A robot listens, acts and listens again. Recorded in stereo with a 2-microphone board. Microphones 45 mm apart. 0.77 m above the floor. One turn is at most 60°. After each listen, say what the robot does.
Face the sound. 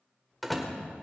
Turn 30° right.
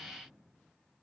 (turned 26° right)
Keep listening.
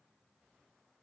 I heard a door slam, but can't make it out now. It was about 25° left or 150° right.